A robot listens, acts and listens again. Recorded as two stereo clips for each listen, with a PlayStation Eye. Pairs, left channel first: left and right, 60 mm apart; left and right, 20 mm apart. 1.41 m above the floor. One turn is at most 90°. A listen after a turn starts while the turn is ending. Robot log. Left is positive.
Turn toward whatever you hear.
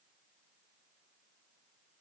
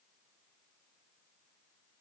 cmd idle
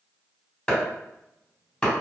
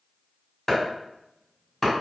cmd yaw +30
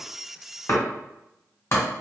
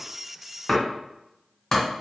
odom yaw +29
note: So it is at 140° left.
cmd yaw +90
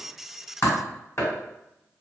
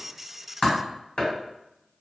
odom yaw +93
note: The chopping is now 50° left.
cmd yaw +50
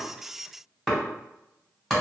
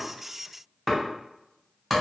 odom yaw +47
end: Found it: chopping, straight ahead, 1 to 2 m away.